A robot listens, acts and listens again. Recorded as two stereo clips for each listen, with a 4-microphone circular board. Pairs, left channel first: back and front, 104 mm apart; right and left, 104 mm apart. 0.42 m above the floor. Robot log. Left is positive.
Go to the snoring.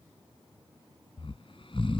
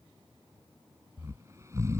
note: The snoring: 150° left.
cmd yaw +150
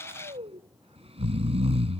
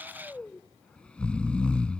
note: The snoring is now 10° right.
cmd yaw -10
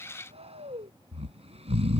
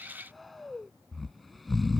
cmd fwd 1.0
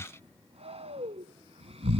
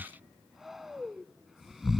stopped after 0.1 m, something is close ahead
end: Something is in my way. I am facing the snoring but have not reached it.